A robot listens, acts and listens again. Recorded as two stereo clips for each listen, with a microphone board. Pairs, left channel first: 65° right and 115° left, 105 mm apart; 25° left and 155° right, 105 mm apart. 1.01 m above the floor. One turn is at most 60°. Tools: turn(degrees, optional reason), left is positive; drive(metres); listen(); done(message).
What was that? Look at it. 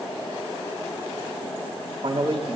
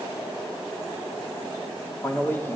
turn(degrees=60, reason="The man speaking: 90° left.")
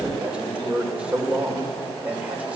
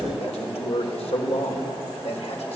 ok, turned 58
turn(degrees=35, reason="The man speaking is now 35° left.")
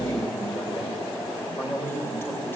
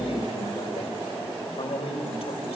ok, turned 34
done("Facing the man speaking.")